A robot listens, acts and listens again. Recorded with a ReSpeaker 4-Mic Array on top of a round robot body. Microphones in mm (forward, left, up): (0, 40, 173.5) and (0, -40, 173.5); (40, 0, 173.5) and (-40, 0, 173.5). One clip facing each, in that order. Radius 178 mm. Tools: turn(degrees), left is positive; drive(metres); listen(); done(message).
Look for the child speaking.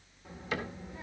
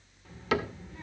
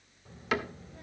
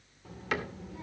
turn(degrees=170)
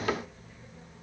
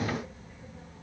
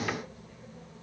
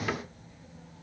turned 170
done("Facing the child speaking.")